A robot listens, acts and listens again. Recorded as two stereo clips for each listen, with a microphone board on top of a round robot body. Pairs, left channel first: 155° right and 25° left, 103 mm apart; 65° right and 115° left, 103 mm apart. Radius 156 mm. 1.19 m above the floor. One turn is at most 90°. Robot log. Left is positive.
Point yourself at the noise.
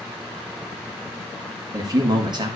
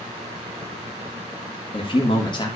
note: The man speaking: 25° right.
cmd yaw -25
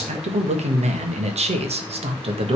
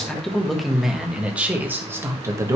note: The man speaking is now 55° left.
cmd yaw +55
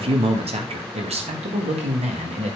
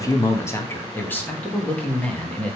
note: The man speaking is now 10° left.
cmd yaw +10
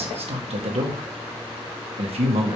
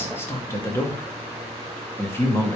end: Facing the man speaking, 2 to 4 m away.